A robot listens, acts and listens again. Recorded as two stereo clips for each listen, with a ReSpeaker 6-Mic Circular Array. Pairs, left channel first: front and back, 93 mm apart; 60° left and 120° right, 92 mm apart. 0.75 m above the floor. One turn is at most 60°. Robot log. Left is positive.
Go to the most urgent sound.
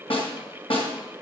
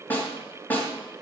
cmd idle
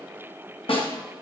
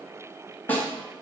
cmd idle
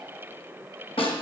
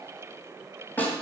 end: I can't make out anything urgent to turn to.